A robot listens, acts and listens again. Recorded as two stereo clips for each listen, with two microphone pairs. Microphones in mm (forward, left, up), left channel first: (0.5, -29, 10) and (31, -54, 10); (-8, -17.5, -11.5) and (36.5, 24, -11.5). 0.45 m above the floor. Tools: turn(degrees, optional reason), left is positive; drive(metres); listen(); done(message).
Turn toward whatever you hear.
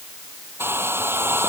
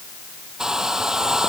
turn(degrees=-40, reason="The hair dryer: 40° right.")
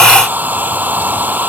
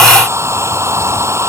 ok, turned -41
done("Facing the hair dryer.")